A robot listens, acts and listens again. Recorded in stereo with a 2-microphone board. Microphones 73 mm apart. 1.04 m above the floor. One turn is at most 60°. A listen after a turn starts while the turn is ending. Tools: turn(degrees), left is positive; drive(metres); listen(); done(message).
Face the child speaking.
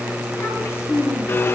turn(degrees=40)
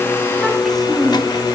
done("Found it: a child speaking, straight ahead, over 4 m away.")